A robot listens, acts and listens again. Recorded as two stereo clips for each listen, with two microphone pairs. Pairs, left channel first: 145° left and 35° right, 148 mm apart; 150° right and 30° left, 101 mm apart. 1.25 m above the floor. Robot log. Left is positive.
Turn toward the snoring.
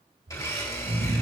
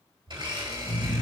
note: The snoring: 45° right.
cmd yaw -45
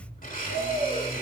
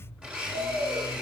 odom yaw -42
end: Found it: snoring, straight ahead.